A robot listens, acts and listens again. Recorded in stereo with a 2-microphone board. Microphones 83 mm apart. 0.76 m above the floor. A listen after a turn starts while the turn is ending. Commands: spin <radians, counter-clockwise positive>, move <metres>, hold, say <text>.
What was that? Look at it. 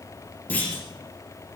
spin 0.35
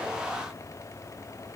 hold
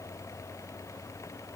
say I heard a clunk, but can't make it out now. It was about straight ahead or 140° left.